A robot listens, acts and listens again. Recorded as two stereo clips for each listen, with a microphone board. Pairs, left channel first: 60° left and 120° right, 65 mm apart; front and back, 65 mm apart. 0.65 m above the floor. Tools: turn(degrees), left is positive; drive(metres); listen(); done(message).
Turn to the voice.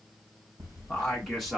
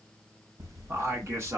turn(degrees=155)
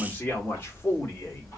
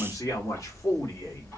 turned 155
turn(degrees=10)
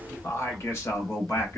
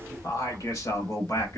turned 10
turn(degrees=15)
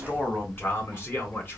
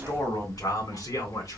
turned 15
done("Found it: a man speaking, straight ahead.")